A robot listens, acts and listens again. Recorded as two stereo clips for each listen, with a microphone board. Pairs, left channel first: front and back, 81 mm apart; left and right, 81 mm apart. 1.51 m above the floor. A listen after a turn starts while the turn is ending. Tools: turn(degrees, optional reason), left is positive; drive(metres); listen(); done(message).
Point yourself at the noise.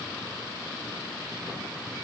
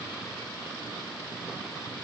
listen()
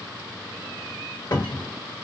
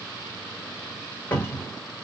turn(degrees=20, reason="The cupboard door: 20° left.")
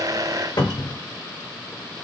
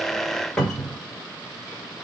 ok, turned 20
turn(degrees=10, reason="The cupboard door is now 10° left.")
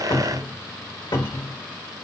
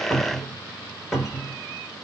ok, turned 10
done("Found it: a cupboard door, straight ahead, 1 to 2 m away.")